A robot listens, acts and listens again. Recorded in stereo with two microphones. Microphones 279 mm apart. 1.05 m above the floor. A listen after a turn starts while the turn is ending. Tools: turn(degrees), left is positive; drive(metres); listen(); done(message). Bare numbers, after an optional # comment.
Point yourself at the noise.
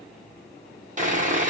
# The sawing: about 25° right or 155° right.
turn(-25)
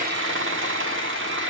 # So it is at 125° right.
turn(-125)
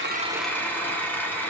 # The sawing is now 10° left.
turn(10)
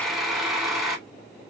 done("Found it: sawing, straight ahead.")